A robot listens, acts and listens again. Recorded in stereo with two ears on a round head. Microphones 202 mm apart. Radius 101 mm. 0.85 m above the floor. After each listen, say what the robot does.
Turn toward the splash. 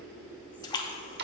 Turn 20° left.
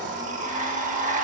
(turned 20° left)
Keep listening.
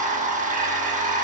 I heard a splash, but can't make it out now. It was about straight ahead or 140° left.